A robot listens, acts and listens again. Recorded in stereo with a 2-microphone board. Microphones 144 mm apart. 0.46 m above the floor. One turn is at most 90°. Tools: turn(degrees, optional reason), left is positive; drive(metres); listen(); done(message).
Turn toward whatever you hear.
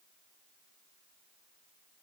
listen()
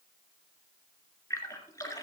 turn(degrees=20, reason="The splash: about 20° left or 160° left.")
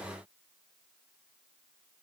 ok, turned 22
listen()
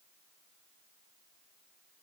done("I heard a splash, but can't make it out now. It was about 5° right or 140° left.")